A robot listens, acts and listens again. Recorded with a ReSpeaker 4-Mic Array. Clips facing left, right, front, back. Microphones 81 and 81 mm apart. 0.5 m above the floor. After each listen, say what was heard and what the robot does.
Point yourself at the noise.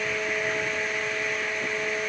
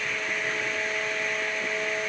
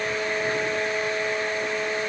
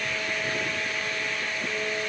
Keep listening.
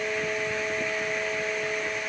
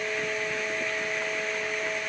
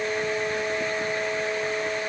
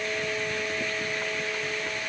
Keep listening.
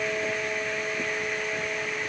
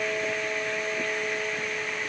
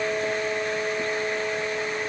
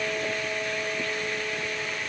I can't make out anything.